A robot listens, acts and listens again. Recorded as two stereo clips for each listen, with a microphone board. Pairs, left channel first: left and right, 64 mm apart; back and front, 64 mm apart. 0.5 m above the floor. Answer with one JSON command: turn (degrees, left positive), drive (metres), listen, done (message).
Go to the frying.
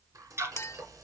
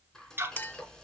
{"turn": -100}
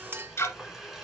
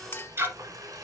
{"drive": 1.0}
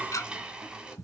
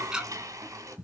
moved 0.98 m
{"turn": -15}
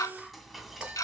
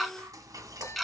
{"drive": 1.0}
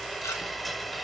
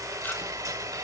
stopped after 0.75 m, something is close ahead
{"done": "I am next to the frying."}